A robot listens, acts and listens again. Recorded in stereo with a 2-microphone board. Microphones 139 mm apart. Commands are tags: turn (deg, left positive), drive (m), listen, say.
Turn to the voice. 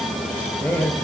<turn deg="30"/>
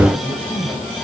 <turn deg="145"/>
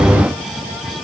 <listen/>
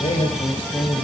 <turn deg="45"/>
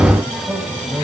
<turn deg="-15"/>
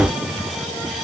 <listen/>
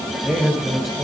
<say>Facing the man speaking.</say>